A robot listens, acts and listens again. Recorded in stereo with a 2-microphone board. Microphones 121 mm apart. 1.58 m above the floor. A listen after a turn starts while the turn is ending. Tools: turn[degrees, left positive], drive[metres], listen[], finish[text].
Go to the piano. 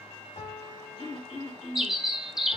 Action: turn[90]
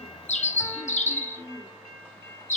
Action: listen[]
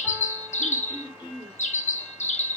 Action: listen[]
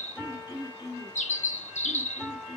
Action: drive[1.0]
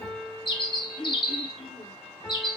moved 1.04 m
Thought: The piano is now 10° left.
Action: turn[10]
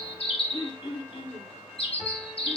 Action: listen[]
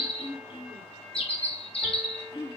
Action: listen[]
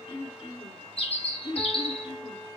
Action: finish[I heard a piano from this way, but can't make it out now. I did not reach it.]